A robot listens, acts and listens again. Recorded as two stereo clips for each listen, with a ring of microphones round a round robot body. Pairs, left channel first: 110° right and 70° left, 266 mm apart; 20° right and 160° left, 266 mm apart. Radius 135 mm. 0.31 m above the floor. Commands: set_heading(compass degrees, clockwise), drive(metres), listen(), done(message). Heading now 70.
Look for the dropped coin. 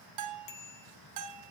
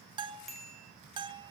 listen()
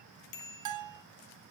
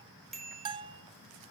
listen()
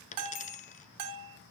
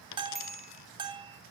set_heading(120)
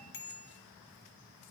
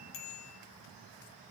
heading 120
done("I heard a dropped coin from this way, but can't make it out now.")